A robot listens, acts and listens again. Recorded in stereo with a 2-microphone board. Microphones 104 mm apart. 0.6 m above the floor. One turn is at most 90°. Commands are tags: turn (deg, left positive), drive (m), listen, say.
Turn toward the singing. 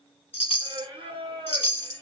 <turn deg="-60"/>
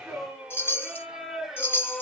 <say>Found it: singing, straight ahead, 1 to 2 m away.</say>